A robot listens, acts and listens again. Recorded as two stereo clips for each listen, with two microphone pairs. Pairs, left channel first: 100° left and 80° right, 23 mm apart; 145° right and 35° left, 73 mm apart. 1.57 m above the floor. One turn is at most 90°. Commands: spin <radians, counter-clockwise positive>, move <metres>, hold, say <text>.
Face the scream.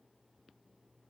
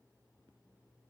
hold
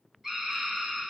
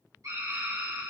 say Facing the scream.